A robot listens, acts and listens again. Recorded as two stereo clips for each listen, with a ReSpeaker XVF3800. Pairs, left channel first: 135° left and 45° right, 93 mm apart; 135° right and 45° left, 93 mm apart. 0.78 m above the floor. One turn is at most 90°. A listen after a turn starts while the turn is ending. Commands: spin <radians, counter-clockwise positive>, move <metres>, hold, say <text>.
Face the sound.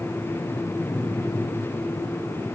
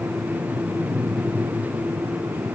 hold
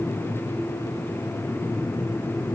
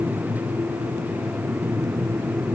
hold
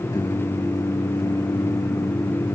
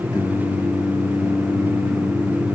spin 1.57
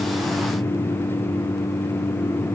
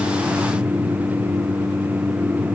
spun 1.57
spin 1.57
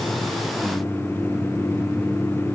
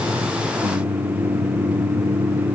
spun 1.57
spin 0.70
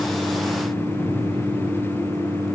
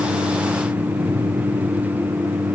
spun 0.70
spin -0.17
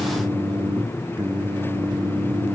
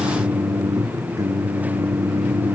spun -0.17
say Found it: singing, straight ahead.